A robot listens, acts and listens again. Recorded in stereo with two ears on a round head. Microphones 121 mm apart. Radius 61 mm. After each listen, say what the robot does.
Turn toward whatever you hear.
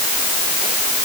Keep listening.
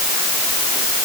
Keep listening.
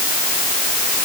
I can't make out anything to turn to.